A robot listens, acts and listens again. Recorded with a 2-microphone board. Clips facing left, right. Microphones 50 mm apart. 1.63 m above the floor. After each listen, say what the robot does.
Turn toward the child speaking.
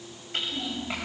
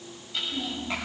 Turn 30° left.
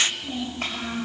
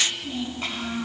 Turn 135° left.
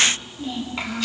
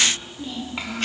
Facing the child speaking, 2 to 4 m away.